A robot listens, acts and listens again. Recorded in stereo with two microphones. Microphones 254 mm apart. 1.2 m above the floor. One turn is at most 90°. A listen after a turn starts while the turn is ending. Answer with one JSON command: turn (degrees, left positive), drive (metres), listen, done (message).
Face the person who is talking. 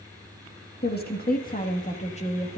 {"turn": 20}
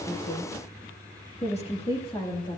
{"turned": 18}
{"turn": 15}
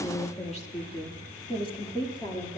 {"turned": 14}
{"turn": 15}
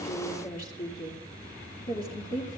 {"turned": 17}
{"turn": 35}
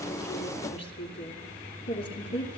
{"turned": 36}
{"turn": 90}
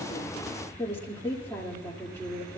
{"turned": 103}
{"turn": 10}
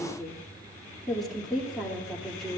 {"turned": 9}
{"done": "Facing the woman speaking."}